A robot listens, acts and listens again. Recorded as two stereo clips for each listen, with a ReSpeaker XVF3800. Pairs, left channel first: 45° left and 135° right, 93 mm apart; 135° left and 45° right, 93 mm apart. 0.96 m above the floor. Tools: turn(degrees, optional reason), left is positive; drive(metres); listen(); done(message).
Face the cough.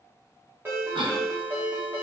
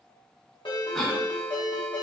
turn(degrees=-140, reason="The cough: 140° right.")
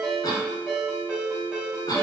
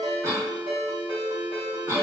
done("Facing the cough.")